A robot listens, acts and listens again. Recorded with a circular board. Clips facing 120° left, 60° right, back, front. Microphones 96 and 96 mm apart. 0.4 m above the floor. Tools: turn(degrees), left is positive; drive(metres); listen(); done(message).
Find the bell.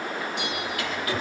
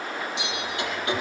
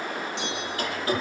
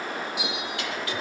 turn(degrees=80)
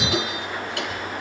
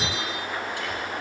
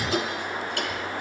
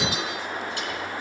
listen()
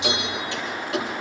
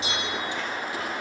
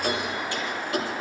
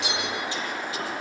done("Found it: a bell, straight ahead.")